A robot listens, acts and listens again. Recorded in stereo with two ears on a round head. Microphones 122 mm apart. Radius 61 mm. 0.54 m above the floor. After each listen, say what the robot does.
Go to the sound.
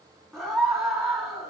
Turn 30° left.
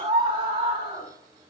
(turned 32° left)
Turn 30° right.
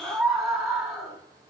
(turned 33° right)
Drive 1.0 m forward.
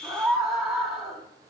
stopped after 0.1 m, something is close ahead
Something is in my way. I am facing the scream but have not reached it.